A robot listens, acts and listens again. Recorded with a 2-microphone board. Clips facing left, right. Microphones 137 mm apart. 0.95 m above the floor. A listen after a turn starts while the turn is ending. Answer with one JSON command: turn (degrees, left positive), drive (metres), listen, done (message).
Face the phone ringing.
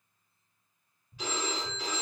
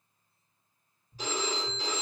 {"turn": -40}
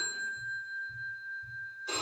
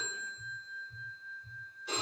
{"done": "Facing the phone ringing, 1 to 2 m away."}